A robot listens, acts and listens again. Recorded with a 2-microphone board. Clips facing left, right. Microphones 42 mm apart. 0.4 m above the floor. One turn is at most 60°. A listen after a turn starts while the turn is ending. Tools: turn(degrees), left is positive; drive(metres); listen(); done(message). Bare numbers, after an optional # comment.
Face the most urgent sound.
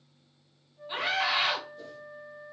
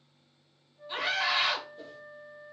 # The scream: about 25° left or 155° left.
turn(25)
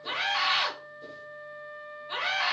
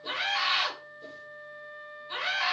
# So it is at 125° left.
turn(60)
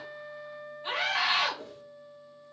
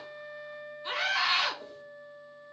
# The scream is now 50° left.
turn(50)
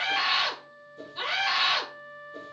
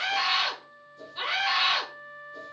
# The scream is now 10° right.
turn(-10)
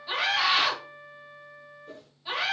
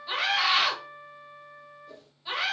done("Found it: a scream, straight ahead.")